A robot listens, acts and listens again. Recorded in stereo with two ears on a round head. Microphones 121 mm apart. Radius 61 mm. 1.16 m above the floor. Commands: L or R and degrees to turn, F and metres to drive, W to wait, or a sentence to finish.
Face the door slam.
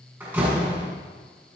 R30
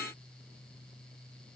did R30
W
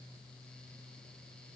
I heard a door slam, but can't make it out now. It was about 15° left or 135° right.